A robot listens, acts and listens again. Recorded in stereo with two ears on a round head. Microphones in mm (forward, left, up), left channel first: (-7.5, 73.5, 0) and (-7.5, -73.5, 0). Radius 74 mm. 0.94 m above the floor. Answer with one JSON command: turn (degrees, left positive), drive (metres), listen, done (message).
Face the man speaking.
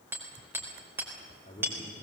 {"turn": 30}
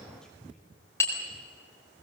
{"listen": true}
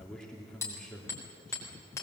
{"done": "Facing the man speaking."}